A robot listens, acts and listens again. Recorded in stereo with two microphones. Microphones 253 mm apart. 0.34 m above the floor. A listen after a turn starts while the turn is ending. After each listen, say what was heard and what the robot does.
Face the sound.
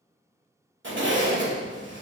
The zipper: about 50° right or 130° right. Turn 50° right.
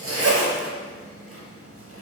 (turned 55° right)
So it is at 70° right. Turn 70° right.
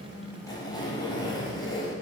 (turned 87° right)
The zipper is now 20° left. Turn 20° left.
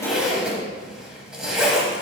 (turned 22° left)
Found it: a zipper, straight ahead.